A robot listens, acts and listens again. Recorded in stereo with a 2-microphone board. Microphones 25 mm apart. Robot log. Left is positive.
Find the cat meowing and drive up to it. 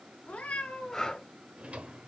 note: The cat meowing: about 75° left or 105° left.
cmd yaw +75
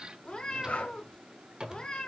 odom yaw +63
note: So it is at 40° left.
cmd yaw +40
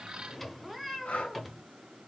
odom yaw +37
cmd fwd 1.0
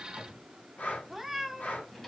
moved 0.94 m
cmd fwd 1.0
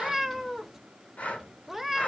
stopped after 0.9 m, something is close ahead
note: The cat meowing is now 10° right.
cmd yaw -10
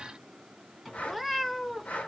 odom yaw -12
end: Arrived at the cat meowing, straight ahead.